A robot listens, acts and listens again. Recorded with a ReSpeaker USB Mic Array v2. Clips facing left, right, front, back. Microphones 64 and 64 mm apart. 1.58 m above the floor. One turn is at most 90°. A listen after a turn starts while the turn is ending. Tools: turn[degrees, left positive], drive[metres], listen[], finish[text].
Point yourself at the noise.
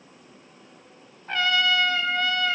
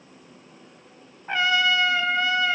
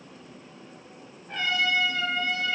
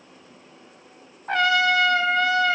Thought: The trumpet: 165° right.
Action: turn[-90]
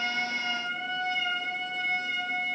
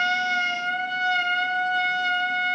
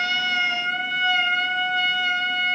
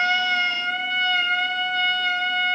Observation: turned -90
Thought: The trumpet is now 85° right.
Action: turn[-85]
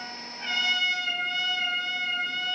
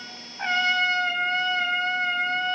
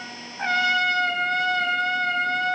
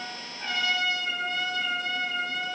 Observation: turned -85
Thought: The trumpet is now 35° right.
Action: turn[-35]
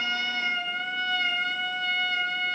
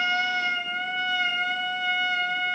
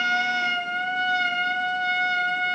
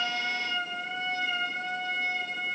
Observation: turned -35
Thought: The trumpet is now 10° right.
Action: turn[-10]
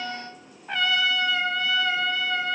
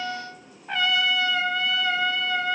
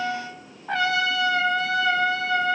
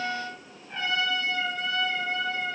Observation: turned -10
Action: finish[Facing the trumpet, 1 to 2 m away.]